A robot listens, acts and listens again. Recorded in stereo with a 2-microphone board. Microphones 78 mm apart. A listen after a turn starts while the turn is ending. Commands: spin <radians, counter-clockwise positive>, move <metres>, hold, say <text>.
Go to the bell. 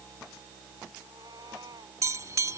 spin -0.79
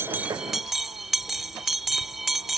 move 1.0
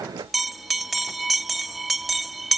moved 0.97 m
move 1.0
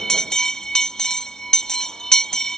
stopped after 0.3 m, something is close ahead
spin 0.17
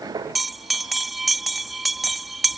say I am next to the bell.